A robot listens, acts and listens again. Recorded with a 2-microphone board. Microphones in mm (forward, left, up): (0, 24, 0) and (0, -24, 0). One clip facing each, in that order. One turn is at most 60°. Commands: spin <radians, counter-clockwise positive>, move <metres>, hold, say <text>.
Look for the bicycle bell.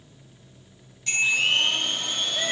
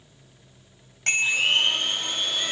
spin -1.05
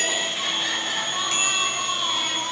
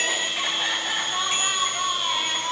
hold
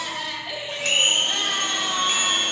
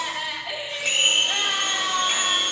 hold
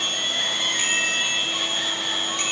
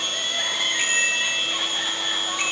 say I heard a bicycle bell, but can't make it out now. It was about 10° right or 50° right.